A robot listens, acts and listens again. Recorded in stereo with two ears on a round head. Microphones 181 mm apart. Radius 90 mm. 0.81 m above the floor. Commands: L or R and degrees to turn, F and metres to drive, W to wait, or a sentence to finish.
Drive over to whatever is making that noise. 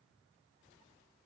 W
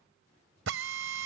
R70
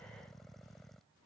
W
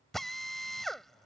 F1.0
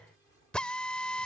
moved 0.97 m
F1.0
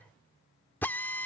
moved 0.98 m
L10
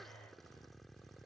W
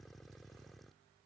W
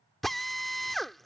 F1.0
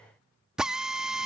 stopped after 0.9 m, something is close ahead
Arrived at the drill, straight ahead.